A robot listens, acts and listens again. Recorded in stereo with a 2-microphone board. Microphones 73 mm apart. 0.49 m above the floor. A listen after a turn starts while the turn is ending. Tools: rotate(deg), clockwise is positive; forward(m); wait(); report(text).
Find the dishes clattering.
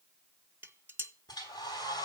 rotate(30)
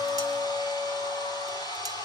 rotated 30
wait()
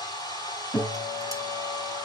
wait()
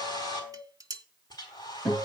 rotate(115)
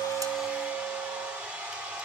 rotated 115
wait()
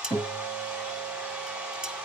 rotate(10)
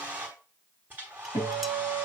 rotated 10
wait()
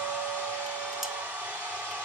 wait()
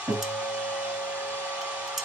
report("I heard dishes clattering from this way, but can't make it out now.")